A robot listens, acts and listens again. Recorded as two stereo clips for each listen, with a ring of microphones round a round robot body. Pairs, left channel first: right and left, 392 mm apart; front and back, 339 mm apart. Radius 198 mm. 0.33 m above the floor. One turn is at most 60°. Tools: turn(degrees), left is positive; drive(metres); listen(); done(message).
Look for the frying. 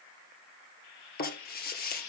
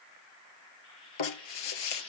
turn(degrees=-60)
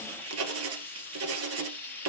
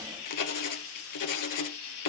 done("Found it: frying, straight ahead.")